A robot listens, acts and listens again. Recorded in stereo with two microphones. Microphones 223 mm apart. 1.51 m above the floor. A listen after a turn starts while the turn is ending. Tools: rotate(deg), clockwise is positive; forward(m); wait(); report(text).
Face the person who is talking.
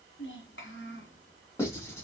rotate(-60)
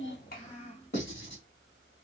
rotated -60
rotate(-35)
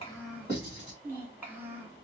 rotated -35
rotate(10)
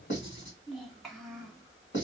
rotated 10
report("Facing the child speaking.")